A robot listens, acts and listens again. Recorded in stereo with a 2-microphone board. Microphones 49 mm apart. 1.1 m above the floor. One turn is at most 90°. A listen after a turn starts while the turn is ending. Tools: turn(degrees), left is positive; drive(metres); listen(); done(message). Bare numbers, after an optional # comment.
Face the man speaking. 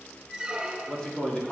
# The man speaking: about 15° left or 165° left.
turn(15)
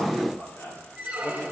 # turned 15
# The man speaking: about 40° left or 140° left.
turn(40)
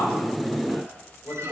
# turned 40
# So it is at 95° left.
turn(90)
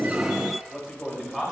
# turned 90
done("Facing the man speaking.")